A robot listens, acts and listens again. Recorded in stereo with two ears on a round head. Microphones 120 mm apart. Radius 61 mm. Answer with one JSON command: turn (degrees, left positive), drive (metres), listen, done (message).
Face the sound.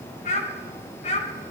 {"turn": 55}
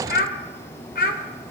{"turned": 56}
{"turn": 75}
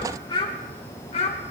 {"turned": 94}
{"turn": 45}
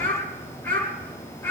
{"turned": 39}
{"turn": 15}
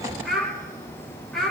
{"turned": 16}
{"done": "Found it: a child speaking, straight ahead."}